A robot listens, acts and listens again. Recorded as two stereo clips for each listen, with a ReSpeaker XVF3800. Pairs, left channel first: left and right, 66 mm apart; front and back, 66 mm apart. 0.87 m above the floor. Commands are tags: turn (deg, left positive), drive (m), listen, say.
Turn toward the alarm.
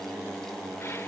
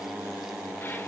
<listen/>
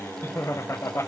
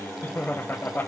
<listen/>
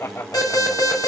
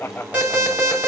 <turn deg="110"/>
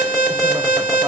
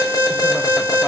<say>Facing the alarm.</say>